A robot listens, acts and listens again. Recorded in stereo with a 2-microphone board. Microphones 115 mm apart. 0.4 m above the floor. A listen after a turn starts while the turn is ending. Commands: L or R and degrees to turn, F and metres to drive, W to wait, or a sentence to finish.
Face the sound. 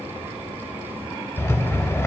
L25
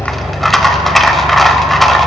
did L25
Facing the rattle, under 1 m away.